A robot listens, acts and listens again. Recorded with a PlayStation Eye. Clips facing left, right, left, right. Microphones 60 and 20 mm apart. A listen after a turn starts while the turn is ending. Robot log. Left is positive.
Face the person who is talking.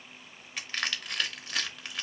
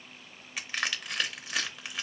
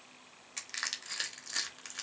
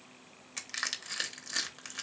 cmd idle
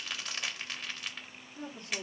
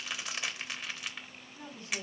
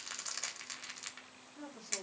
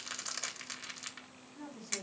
note: The woman speaking: about 60° left or 120° left.
cmd yaw +60
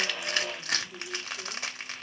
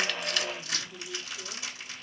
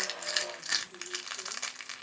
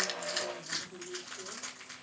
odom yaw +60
note: So it is at 15° left.
cmd yaw +15
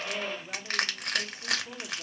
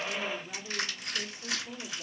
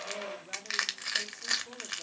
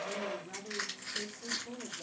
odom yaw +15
note: The woman speaking is now 25° left.
cmd yaw +25
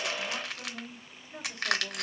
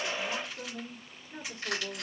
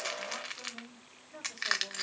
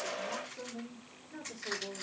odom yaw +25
note: The woman speaking is now 15° right.
cmd yaw -15
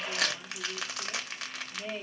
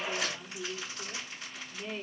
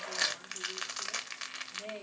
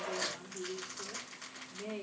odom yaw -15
end: Found it: a woman speaking, straight ahead.